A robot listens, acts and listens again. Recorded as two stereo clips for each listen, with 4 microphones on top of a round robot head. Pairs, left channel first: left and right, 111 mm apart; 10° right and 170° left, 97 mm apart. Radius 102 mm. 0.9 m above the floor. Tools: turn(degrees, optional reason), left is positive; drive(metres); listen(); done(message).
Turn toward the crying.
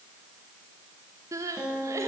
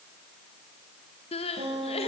turn(degrees=-25, reason="The crying: 25° right.")
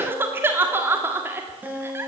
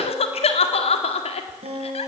turn(degrees=-20, reason="The crying is now 20° right.")
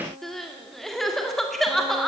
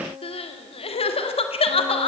done("Facing the crying.")